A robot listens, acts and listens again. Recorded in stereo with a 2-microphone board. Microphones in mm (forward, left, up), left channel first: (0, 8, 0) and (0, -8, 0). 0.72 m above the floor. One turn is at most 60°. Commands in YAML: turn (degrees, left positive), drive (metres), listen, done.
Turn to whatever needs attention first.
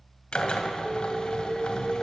turn: -15
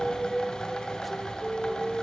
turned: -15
turn: -60
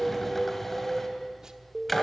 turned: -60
turn: -60
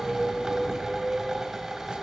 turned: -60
turn: -60
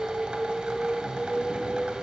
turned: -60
turn: -25
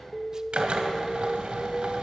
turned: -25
done: "Facing the alarm."